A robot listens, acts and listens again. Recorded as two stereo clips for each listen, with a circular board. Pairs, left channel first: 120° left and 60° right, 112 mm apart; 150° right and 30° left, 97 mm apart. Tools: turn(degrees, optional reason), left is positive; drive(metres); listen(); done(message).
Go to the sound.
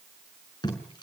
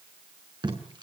turn(degrees=70, reason="The tape being pulled: 70° left.")
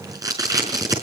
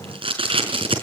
drive(metres=1.0)
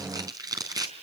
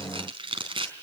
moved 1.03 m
drive(metres=1.0)
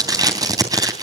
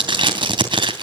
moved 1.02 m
drive(metres=1.0)
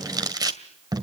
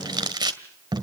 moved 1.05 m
turn(degrees=-10, reason="The tape being pulled is now 10° right.")
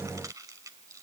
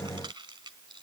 listen()
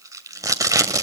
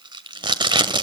drive(metres=1.0)
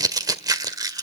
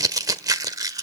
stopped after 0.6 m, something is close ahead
turn(degrees=-10, reason="The tape being pulled is now 10° right.")
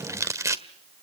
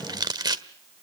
done("I am next to the tape being pulled.")